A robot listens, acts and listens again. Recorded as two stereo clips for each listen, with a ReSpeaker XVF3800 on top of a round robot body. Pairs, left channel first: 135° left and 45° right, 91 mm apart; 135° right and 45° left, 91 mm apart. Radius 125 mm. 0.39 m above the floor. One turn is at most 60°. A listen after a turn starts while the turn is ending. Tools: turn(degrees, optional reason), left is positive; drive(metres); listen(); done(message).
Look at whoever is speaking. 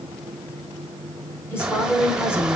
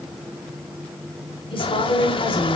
turn(degrees=-60, reason="The woman speaking: 160° right.")
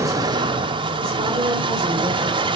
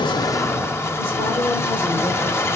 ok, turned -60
turn(degrees=-60, reason="Nothing new. It was at 100° right.")
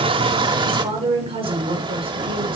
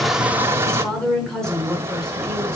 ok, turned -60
turn(degrees=-50, reason="The woman speaking is now 50° right.")
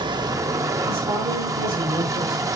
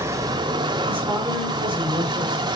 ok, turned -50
turn(degrees=-25, reason="The woman speaking is now 25° right.")
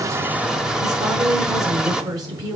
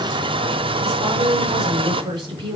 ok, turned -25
done("Facing the woman speaking.")